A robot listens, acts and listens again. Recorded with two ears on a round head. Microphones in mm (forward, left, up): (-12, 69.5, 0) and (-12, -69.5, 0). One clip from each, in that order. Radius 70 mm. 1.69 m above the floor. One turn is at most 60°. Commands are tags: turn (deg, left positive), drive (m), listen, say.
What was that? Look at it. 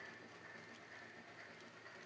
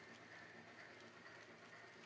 <listen/>
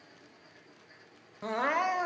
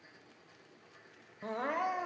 <turn deg="35"/>
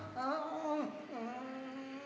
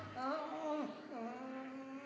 <say>Facing the crying.</say>